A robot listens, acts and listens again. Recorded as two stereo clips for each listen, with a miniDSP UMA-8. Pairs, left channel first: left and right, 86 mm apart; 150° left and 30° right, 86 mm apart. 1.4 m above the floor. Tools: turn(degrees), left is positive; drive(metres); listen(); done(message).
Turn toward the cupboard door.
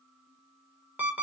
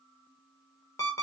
listen()
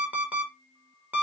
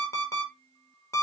listen()
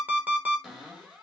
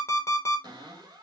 done("Facing the cupboard door, 1 to 2 m away.")